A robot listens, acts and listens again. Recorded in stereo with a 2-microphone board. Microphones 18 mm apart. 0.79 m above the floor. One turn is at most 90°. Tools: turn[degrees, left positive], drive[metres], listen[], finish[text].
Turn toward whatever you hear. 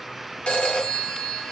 Action: turn[90]
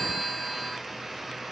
Action: finish[Facing the phone ringing, 1 to 2 m away.]